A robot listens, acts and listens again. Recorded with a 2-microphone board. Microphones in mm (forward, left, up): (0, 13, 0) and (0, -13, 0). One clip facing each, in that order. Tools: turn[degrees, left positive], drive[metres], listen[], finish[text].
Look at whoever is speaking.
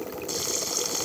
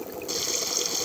Action: listen[]
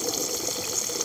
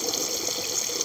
Action: listen[]
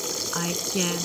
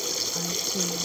Thought: The woman speaking: about 70° left or 110° left.
Action: turn[70]
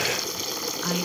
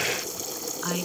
Action: finish[Facing the woman speaking.]